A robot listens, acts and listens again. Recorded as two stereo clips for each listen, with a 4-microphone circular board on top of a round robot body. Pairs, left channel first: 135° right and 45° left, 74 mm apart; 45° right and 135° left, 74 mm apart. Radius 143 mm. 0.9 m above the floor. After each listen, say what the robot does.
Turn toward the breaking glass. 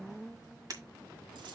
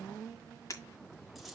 Facing the breaking glass, 1 to 2 m away.